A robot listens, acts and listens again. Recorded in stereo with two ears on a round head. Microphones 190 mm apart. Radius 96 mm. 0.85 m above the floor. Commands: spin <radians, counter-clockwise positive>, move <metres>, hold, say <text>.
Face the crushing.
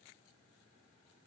hold
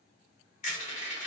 spin 0.61
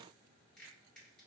hold
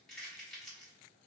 say Found it: crushing, straight ahead, 1 to 2 m away.